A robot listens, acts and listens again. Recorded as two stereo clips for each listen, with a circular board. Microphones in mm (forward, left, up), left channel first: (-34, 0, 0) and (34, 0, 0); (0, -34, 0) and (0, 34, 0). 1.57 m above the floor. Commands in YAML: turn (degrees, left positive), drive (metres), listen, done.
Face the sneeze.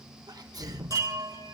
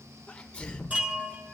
turn: -15
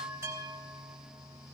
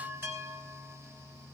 done: "Facing where the sneeze came from. I can't hear it now."